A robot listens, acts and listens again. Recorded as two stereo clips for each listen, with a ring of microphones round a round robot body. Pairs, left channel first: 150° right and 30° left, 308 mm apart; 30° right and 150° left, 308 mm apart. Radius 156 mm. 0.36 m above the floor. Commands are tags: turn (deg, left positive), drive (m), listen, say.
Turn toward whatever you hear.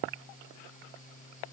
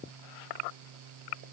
<listen/>
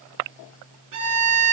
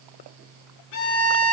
<say>Found it: a violin, straight ahead.</say>